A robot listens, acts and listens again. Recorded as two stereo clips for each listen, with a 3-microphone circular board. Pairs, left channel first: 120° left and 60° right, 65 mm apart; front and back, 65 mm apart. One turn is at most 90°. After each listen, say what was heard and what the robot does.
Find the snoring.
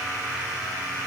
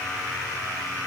Keep listening.
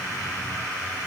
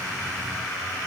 Keep listening.
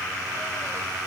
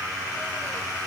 I can't make out snoring.